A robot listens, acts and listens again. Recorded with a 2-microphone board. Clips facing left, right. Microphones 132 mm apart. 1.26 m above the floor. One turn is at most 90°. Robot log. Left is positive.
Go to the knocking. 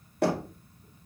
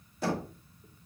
note: The knocking: about 65° left or 115° left.
cmd yaw +65
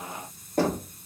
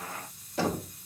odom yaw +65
note: So it is at 50° left.
cmd yaw +50
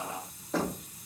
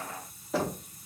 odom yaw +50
cmd fwd 1.0
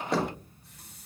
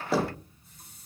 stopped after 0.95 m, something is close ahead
end: I am next to the knocking.